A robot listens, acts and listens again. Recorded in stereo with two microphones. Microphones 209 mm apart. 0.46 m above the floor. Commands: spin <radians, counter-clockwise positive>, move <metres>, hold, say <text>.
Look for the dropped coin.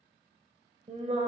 hold
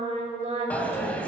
spin 0.52
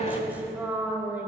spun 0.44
hold
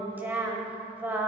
say I heard a dropped coin, but can't make it out now. It was about 20° right or 150° left.